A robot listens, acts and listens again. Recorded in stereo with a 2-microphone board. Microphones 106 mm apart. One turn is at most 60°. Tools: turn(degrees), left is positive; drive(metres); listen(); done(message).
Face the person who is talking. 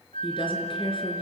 turn(degrees=55)
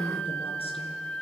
turn(degrees=60)
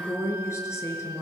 turn(degrees=25)
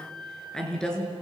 done("Found it: a woman speaking, straight ahead, over 4 m away.")